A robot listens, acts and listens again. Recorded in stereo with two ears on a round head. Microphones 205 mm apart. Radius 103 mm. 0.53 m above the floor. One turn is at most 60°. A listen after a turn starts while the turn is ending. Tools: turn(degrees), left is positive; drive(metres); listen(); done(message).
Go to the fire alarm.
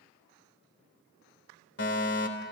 turn(degrees=55)
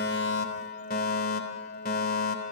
turn(degrees=50)
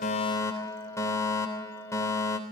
turn(degrees=15)
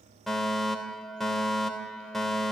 drive(metres=1.0)
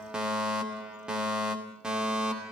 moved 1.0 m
drive(metres=1.0)
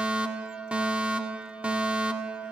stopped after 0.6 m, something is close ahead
turn(degrees=-10)
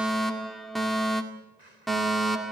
done("Arrived at the fire alarm, straight ahead.")